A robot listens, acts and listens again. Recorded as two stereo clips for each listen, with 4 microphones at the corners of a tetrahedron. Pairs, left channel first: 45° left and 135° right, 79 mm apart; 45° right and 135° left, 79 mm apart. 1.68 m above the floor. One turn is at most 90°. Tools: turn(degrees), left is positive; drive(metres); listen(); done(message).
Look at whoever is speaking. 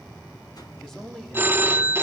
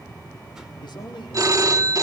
turn(degrees=-40)
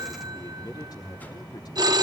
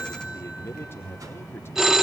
turn(degrees=15)
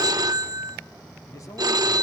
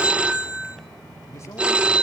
done("Found it: a man speaking, straight ahead, 2 to 4 m away.")